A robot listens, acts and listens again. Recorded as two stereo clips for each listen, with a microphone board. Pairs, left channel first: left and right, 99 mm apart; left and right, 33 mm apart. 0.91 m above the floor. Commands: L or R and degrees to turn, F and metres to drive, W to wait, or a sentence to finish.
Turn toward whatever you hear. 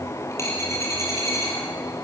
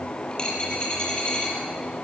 L30
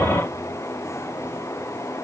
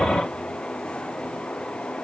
W
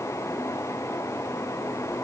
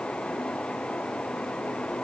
I heard a dropped coin, but can't make it out now. It was about straight ahead or 120° left.